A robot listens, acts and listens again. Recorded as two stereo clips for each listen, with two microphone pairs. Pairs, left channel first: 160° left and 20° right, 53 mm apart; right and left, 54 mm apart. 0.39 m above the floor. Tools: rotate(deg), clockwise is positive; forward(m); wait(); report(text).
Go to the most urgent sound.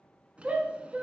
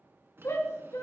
rotate(75)
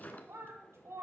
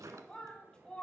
rotate(20)
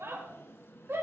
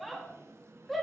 forward(1.0)
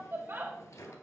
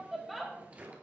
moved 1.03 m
forward(1.0)
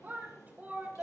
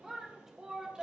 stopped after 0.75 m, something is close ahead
rotate(-10)
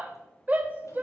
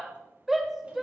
report("I am next to the shout.")